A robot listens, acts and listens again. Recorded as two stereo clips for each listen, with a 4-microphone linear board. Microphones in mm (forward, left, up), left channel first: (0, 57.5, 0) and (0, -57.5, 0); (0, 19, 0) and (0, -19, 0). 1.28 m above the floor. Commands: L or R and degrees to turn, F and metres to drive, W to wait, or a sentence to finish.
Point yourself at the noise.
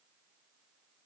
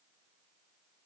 W
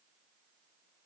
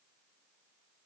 W
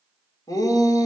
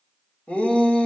L35
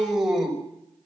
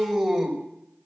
Facing the shout.